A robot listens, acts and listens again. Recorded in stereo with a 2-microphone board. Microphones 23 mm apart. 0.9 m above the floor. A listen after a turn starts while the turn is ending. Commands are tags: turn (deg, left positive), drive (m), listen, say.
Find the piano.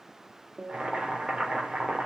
<turn deg="-90"/>
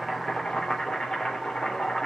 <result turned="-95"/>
<listen/>
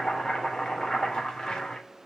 <listen/>
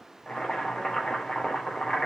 <say>Facing where the piano came from. I can't hear it now.</say>